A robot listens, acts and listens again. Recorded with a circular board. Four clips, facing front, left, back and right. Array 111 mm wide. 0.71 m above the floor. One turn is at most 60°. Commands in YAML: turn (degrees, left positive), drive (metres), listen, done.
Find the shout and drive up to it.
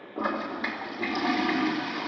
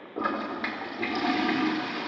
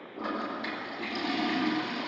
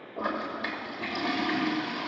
listen: true
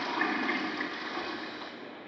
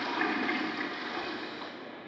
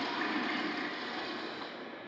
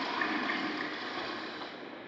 listen: true
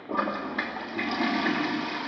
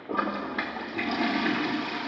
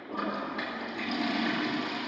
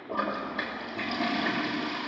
done: "I can't make out a shout, only a toilet flushing."